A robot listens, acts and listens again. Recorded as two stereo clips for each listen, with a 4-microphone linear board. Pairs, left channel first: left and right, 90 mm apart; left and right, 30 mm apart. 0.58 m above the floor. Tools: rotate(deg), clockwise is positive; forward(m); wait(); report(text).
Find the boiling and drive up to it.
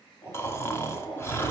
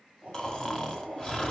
rotate(-40)
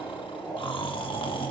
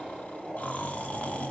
forward(1.0)
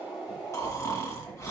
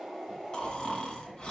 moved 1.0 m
forward(1.0)
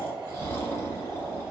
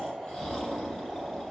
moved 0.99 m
rotate(10)
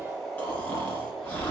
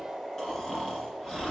forward(1.0)
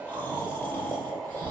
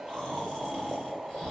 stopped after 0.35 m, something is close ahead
report("Arrived at the boiling, straight ahead.")